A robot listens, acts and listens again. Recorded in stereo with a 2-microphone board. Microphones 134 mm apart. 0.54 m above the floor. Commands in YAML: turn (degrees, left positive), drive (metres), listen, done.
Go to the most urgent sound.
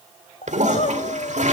turn: 65
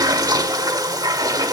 listen: true
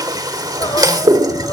turn: 35
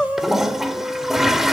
drive: 1.0
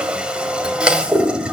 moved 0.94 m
listen: true
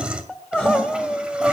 turn: 15
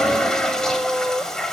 drive: 1.0
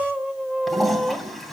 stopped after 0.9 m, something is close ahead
done: "I am next to the crying."